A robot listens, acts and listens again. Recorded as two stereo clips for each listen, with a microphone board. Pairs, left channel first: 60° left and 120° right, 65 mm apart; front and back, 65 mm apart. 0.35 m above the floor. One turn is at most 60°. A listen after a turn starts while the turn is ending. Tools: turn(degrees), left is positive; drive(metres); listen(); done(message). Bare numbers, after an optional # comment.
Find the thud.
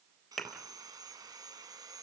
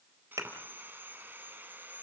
# The thud: 145° left.
turn(60)
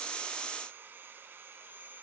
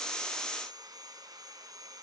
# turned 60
# Nothing new. It was at 85° left.
turn(60)
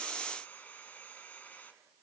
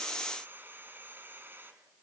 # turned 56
# Nothing new. It was at 25° left.
turn(25)
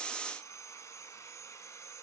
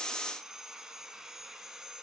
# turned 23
done("Facing where the thud came from. I can't hear it now.")